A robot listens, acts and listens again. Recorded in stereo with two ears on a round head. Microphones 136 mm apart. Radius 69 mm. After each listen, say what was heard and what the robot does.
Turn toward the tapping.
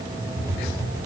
The tapping: about 20° right or 160° right. Turn 20° right.
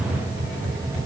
So it is at 140° right. Turn 140° right.
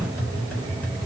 The tapping is now 10° left. Turn 10° left.
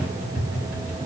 Facing the tapping, 1 to 2 m away.